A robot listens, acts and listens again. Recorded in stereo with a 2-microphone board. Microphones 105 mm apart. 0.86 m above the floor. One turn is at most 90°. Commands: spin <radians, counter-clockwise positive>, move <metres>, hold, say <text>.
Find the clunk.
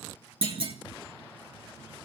spin -1.13
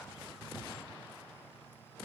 hold
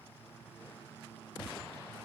say I heard a clunk, but can't make it out now. It was about straight ahead or 50° right.